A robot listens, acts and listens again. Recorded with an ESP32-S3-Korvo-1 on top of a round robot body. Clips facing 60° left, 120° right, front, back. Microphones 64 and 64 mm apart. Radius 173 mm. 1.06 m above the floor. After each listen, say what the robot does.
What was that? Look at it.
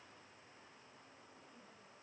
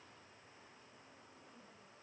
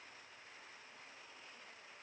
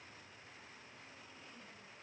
Keep listening.
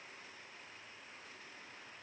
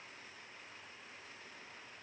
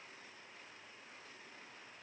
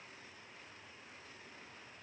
Keep listening.
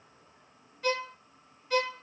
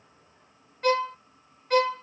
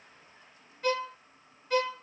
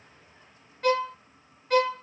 Turn 155° right.
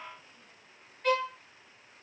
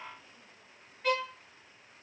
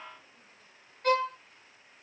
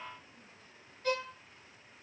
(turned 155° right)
Turn 30° right.
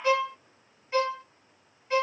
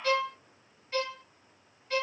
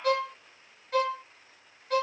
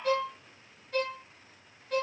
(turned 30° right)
Turn 10° right.
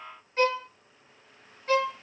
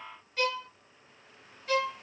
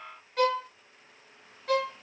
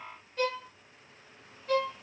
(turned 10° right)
Facing the violin.